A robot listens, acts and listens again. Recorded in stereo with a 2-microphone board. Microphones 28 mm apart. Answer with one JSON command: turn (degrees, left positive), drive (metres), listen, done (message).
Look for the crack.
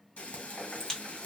{"turn": 20}
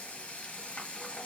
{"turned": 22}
{"listen": true}
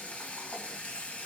{"done": "I heard a crack, but can't make it out now. It was about straight ahead or 140° left."}